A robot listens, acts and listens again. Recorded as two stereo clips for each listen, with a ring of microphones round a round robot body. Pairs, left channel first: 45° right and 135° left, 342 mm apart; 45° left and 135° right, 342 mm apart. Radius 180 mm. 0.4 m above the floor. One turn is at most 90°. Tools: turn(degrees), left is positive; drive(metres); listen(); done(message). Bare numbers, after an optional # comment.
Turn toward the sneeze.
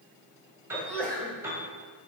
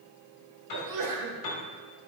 # The sneeze: 130° right.
turn(-90)
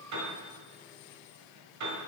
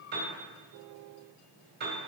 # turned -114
# Nothing new. It was at 15° right.
turn(-15)
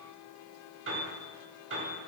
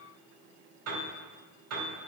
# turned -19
done("I heard a sneeze from this way, but can't make it out now.")